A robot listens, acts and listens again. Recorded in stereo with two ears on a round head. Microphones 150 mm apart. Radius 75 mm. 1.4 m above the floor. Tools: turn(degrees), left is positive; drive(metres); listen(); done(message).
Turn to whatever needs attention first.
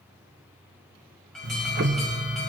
turn(degrees=30)
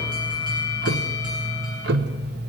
turn(degrees=-25)
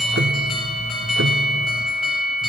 done("Found it: an alarm, straight ahead.")